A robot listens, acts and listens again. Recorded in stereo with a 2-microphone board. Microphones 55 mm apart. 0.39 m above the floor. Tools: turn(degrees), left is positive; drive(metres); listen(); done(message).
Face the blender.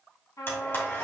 turn(degrees=45)
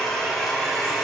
done("Facing the blender, 2 to 4 m away.")